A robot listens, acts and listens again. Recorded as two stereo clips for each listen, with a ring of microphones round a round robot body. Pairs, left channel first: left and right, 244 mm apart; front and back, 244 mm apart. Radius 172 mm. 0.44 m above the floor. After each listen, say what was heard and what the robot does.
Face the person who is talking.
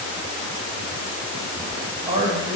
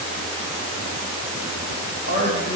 The man speaking: 30° right. Turn 30° right.
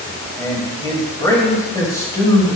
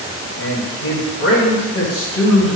The man speaking is now 15° left. Turn 15° left.
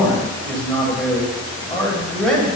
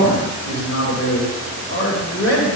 Facing the man speaking, 2 to 4 m away.